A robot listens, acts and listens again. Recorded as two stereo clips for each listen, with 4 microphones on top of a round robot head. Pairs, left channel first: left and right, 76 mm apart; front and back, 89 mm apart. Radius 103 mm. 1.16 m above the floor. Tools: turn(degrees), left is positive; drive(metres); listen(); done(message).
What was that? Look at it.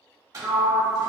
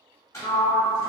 turn(degrees=-50)
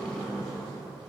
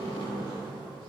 done("Found it: a sliding door, straight ahead, 1 to 2 m away.")